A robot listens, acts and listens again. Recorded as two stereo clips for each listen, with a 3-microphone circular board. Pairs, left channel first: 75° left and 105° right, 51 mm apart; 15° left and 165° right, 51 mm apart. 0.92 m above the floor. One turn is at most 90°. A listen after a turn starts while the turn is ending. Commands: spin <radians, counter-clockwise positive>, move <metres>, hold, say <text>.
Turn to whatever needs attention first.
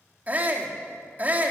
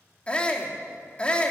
spin -0.87
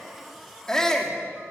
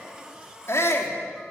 say Facing the shout.